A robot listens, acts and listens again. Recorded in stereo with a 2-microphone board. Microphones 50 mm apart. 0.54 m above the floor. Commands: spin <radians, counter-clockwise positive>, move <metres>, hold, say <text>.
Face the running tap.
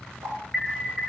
spin -1.57
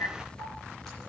hold
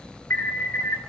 hold
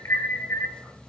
say I heard a running tap from this way, but can't make it out now.